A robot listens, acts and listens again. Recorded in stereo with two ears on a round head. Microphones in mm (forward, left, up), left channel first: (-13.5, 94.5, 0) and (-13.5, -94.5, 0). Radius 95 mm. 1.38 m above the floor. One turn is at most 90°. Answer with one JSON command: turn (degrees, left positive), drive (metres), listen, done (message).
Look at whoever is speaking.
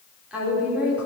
{"turn": -30}
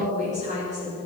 {"turn": -90}
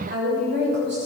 {"turn": -55}
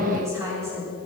{"turn": -15}
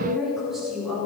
{"done": "Found it: a woman speaking, straight ahead, over 4 m away."}